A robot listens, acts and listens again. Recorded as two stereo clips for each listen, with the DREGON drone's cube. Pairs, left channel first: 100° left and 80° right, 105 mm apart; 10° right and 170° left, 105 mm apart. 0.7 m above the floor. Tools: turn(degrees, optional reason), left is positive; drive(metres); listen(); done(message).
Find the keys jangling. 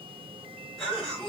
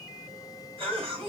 listen()
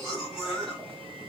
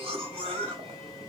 listen()
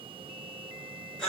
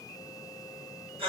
done("I can't make out keys jangling, only a cough.")